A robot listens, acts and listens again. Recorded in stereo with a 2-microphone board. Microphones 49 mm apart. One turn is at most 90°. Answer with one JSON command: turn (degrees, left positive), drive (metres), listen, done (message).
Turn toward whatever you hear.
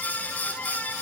{"listen": true}
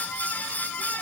{"listen": true}
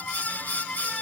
{"done": "I can't make out anything to turn to."}